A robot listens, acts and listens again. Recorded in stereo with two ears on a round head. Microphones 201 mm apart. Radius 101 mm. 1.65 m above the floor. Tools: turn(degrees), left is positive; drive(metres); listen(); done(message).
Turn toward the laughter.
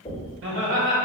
turn(degrees=-55)
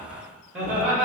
done("Facing the laughter, 2 to 4 m away.")